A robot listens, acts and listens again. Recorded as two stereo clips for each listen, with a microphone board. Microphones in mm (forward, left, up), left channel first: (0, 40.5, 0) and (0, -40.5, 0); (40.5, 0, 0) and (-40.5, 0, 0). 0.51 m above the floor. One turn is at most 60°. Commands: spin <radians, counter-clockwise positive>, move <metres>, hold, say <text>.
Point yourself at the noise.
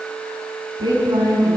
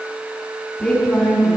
spin -1.05
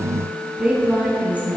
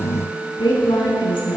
spin -0.35
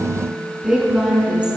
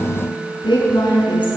spin -0.26
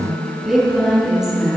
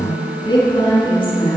say Facing the woman speaking, over 4 m away.